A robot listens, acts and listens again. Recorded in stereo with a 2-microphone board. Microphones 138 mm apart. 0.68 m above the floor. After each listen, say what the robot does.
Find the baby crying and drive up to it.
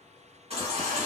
Turn 50° right.
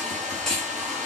Drive 1.0 m forward.
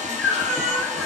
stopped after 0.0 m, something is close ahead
Blocked. The baby crying is further on, straight ahead.